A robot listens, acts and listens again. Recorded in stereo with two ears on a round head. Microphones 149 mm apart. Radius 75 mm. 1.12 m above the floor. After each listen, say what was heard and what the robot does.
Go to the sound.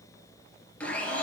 Turn 30° left.
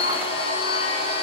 So it is at 140° left. Turn 140° left.
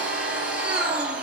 The blender is now 10° right. Turn 10° right.
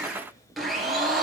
Drive 1.0 m forward.
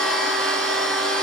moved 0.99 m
Drive 1.0 m forward.
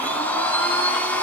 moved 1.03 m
The blender is now 10° left. Turn 10° left.
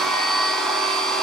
Drive 1.0 m forward.
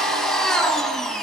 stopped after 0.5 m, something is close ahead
I am next to the blender.